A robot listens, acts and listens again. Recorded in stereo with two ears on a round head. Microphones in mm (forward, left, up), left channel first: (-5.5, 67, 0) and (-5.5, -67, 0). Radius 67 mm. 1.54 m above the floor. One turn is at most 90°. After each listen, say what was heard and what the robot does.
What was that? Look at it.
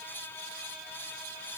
Keep listening.
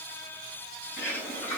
The bird: about 15° left or 165° left. Turn 15° left.
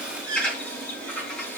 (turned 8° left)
Turn 30° left.
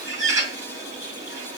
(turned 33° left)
So it is at 20° right. Turn 20° right.
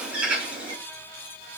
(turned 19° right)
Facing the bird, 2 to 4 m away.